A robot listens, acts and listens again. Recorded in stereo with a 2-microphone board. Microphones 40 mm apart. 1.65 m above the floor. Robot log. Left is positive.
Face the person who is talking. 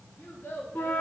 note: The child speaking: about 65° left or 115° left.
cmd yaw +65
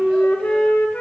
cmd idle
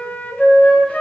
cmd idle
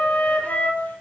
end: I heard a child speaking, but can't make it out now. It was about straight ahead or 50° left.